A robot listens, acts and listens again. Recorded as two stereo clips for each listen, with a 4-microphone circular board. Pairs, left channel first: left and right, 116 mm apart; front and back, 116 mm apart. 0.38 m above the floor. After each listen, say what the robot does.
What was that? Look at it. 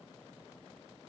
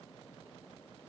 Keep listening.
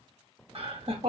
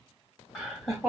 Turn 90° right.
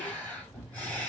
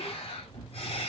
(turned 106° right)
Turn 15° left.
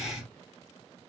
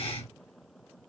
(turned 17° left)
Found it: laughter, straight ahead.